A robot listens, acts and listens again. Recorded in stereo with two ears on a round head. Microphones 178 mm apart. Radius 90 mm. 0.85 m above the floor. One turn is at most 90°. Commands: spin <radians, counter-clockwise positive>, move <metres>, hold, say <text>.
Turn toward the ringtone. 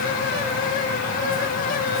hold
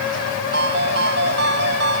spin -0.96
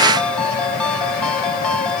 say Facing the ringtone.